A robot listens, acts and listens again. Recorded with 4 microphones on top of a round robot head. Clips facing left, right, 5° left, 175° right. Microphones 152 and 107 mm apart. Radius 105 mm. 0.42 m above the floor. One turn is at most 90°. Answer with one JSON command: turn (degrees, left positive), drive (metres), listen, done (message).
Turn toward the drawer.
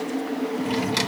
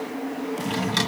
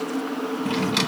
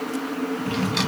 {"turn": 10}
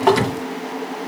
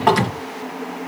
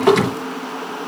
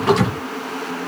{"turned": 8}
{"done": "Facing the drawer, 2 to 4 m away."}